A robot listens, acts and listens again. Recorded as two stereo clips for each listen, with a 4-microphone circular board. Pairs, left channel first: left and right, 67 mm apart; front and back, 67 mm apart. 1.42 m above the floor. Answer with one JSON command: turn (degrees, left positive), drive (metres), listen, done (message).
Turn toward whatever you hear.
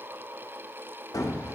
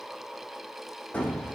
{"turn": 70}
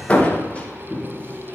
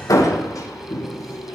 {"turn": 20}
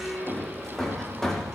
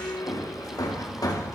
{"done": "Found it: hammering, straight ahead."}